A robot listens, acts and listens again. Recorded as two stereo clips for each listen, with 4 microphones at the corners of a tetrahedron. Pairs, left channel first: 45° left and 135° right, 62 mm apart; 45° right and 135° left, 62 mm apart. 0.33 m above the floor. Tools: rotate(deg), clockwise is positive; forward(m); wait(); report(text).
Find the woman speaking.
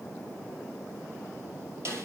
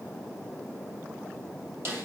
wait()
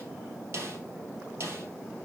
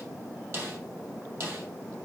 wait()
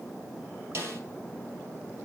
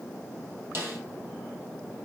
report("I can't make out a woman speaking to turn to.")